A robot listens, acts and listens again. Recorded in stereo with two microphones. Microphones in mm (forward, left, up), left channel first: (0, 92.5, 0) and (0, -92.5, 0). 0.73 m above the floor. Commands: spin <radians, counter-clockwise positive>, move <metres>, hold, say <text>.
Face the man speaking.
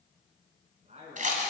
spin -0.61
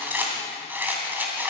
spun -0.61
hold
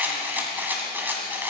hold
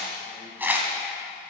say I heard a man speaking, but can't make it out now. It was about straight ahead or 110° right.